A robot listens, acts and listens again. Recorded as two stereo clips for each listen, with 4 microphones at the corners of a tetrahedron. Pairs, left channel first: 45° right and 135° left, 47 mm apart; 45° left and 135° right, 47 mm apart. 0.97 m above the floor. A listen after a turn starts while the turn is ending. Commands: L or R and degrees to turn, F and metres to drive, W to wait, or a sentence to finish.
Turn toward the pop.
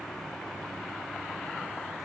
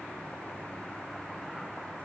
W
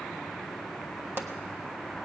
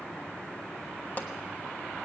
L100
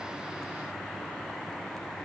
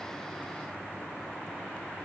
I heard a pop from this way, but can't make it out now.